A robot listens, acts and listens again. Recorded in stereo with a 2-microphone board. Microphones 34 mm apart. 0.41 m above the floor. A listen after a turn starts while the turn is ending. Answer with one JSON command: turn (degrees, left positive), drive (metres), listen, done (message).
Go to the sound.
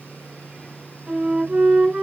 {"turn": -45}
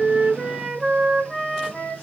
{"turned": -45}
{"drive": 1.0}
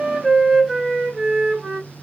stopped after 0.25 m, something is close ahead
{"done": "Something is in my way. I am facing the flute but have not reached it."}